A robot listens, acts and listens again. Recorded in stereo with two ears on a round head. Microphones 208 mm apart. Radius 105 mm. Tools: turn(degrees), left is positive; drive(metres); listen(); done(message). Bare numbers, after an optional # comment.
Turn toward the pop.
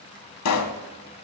# The pop: about 75° left or 105° left.
turn(75)
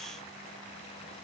listen()
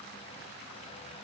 done("I heard a pop, but can't make it out now. It was about straight ahead or 30° left.")